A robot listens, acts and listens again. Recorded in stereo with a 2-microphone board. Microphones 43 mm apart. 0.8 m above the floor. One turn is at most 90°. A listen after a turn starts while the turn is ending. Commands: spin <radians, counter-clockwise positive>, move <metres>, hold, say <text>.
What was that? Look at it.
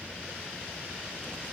hold
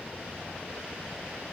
hold
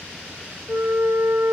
spin -1.31
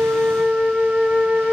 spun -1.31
spin -0.44
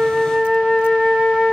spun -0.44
say Facing the flute, 2 to 4 m away.